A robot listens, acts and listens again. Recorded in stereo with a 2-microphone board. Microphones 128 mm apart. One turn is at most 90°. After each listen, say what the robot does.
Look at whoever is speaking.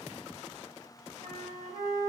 Keep listening.
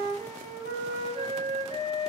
Keep listening.
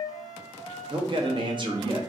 Turn 40° right.
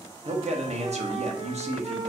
Turn 90° right.
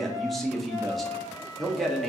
Facing the man speaking, under 1 m away.